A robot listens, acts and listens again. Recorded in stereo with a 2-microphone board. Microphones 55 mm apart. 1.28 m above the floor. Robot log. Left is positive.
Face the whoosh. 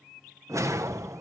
note: The whoosh: about 70° right or 110° right.
cmd yaw -70
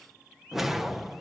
end: Facing the whoosh.